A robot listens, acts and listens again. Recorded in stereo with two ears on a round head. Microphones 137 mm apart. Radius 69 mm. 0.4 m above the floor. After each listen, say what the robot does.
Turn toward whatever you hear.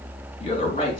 Turn 40° left.
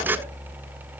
Keep listening.
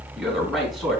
Found it: a man speaking, straight ahead.